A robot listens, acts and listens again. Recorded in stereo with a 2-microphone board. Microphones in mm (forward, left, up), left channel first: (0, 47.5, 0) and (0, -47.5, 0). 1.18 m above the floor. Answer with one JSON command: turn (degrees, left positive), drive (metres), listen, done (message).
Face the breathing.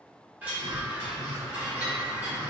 {"turn": -50}
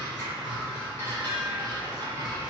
{"done": "Found it: breathing, straight ahead."}